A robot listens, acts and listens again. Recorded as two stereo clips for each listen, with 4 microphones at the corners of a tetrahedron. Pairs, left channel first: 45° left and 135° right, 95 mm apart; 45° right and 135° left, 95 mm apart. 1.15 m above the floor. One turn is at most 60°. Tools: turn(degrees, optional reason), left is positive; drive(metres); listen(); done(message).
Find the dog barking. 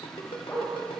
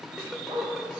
turn(degrees=60, reason="The dog barking: 110° left.")
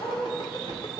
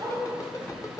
turn(degrees=60, reason="The dog barking is now 80° left.")
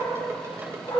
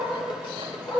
done("Facing the dog barking, over 4 m away.")